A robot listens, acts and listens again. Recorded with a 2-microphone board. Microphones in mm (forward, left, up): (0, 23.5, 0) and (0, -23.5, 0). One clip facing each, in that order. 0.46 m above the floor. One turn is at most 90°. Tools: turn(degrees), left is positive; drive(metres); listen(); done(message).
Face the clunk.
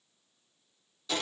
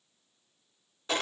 listen()
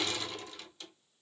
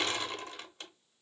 listen()
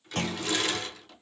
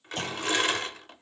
turn(degrees=65)
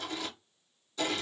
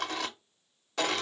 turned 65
listen()
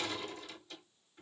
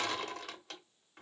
done("I heard a clunk, but can't make it out now. It was about straight ahead or 50° left.")